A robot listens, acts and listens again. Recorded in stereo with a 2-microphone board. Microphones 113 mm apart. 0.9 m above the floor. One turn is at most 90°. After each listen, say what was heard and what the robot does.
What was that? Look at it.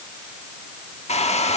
The hair dryer: about 70° left or 110° left. Turn 70° left.
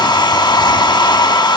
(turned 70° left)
So it is at 40° left. Turn 40° left.
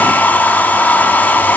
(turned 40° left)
The hair dryer is now 15° left. Turn 15° left.
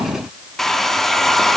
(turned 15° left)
Found it: a hair dryer, straight ahead.